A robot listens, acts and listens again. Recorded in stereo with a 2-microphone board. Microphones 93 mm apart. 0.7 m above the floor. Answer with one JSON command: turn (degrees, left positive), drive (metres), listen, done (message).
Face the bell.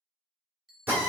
{"turn": 30}
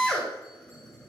{"listen": true}
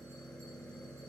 {"listen": true}
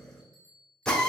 {"turn": -35}
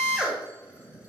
{"listen": true}
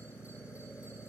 {"listen": true}
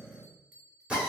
{"turn": -15}
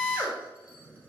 {"listen": true}
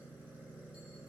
{"listen": true}
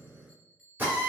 {"done": "Facing the bell."}